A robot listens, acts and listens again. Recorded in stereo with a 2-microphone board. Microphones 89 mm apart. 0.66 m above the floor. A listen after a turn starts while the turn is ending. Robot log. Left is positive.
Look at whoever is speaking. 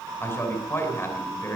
note: The man speaking: about 30° left or 150° left.
cmd yaw +30
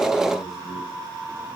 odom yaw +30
cmd idle
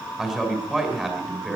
end: Found it: a man speaking, straight ahead.